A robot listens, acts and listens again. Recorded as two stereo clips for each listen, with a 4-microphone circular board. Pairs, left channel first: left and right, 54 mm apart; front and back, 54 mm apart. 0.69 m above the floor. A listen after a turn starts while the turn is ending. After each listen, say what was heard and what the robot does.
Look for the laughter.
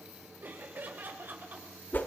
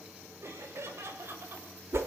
The laughter: 140° right. Turn 140° right.
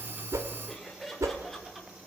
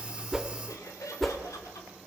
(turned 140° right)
Found it: laughter, straight ahead, 2 to 4 m away.